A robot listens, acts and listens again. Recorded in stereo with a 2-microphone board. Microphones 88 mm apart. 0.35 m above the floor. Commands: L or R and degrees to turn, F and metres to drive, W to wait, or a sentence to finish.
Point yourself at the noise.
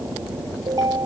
R45
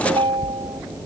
R90
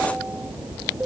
R10
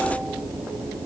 W
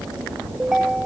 Facing the ringtone.